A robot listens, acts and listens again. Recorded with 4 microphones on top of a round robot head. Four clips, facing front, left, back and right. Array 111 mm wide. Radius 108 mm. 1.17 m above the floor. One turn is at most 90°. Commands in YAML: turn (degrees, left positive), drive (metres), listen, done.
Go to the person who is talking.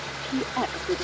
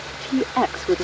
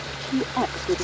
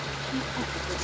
turn: 90
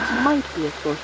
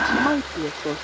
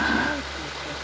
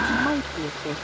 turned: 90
turn: 20
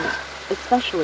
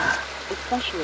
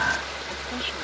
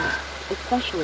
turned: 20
drive: 1.0
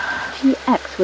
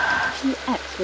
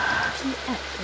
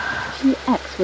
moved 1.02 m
turn: -15
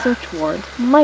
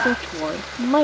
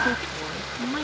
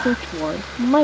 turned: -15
drive: 1.0
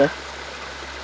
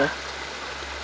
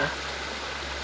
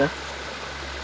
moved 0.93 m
listen: true
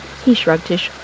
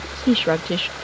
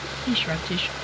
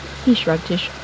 drive: 1.0
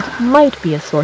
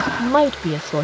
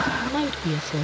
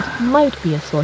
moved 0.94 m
drive: 1.0
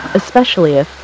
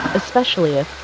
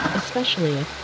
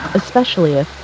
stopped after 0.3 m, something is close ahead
turn: -10
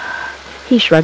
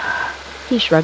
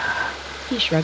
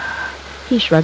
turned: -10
done: "I am next to the woman speaking."